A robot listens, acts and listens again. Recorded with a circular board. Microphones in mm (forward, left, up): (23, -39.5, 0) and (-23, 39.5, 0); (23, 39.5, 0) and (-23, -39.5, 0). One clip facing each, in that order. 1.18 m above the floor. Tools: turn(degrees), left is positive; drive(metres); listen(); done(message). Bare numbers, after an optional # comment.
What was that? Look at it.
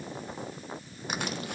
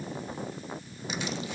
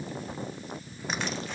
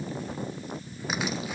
listen()
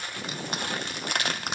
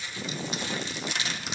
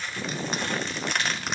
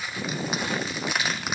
# The crushing: 35° right.
turn(-35)
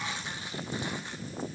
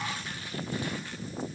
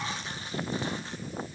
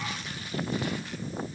listen()
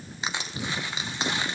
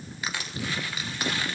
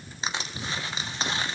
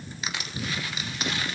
done("Facing the crushing.")